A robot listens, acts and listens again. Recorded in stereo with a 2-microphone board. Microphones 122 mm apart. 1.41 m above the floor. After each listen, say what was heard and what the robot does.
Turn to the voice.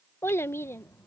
The child speaking: about 20° left or 160° left. Turn 20° left.
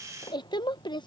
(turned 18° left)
So it is at 140° left. Turn 140° left.
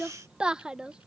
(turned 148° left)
The child speaking is now 10° right. Turn 10° right.
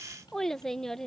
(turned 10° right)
Found it: a child speaking, straight ahead.